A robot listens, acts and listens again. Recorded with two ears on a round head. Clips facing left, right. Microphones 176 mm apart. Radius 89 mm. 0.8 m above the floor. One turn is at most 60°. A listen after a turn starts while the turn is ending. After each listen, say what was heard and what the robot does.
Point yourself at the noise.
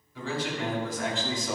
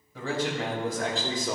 The man speaking: about 30° right or 150° right. Turn 30° right.
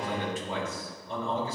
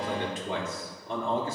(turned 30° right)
So it is at 135° right. Turn 60° right.
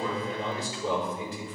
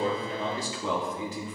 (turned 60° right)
The man speaking is now 60° right. Turn 60° right.
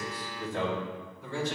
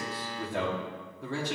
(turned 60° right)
The man speaking is now 55° right. Turn 55° right.
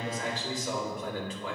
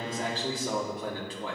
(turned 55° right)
The man speaking is now 30° right. Turn 30° right.
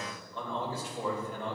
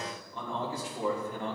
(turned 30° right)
The man speaking is now 15° right. Turn 15° right.
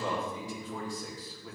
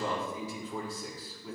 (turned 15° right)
Found it: a man speaking, straight ahead, 2 to 4 m away.